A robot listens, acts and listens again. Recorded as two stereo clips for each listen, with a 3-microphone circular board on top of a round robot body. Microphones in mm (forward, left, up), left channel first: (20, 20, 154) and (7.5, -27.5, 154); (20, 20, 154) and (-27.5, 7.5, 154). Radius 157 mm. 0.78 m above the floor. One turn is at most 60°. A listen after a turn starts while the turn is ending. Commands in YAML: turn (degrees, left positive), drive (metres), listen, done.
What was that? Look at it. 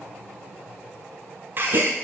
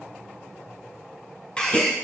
turn: -60
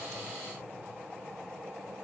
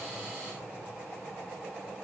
done: "Facing where the gasp came from. I can't hear it now."